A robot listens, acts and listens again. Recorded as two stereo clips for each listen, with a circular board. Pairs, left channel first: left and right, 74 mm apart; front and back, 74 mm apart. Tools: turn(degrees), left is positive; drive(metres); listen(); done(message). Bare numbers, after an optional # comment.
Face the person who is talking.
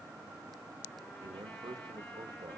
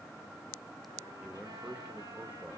# The man speaking: 110° right.
turn(-110)
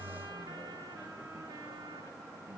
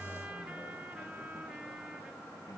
listen()
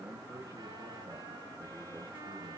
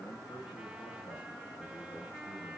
# The man speaking is now 30° right.
turn(-30)
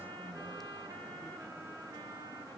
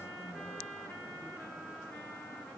listen()
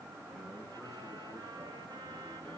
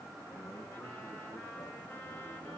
listen()
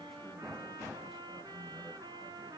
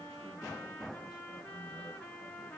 done("I heard a man speaking from this way, but can't make it out now.")